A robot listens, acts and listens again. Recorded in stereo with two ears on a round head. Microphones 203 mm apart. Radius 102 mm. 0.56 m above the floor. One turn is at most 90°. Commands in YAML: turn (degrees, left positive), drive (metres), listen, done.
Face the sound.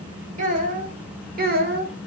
turn: -45
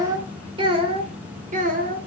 turn: -40
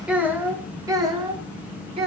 turn: -25
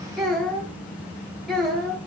done: "Found it: a child speaking, straight ahead, 1 to 2 m away."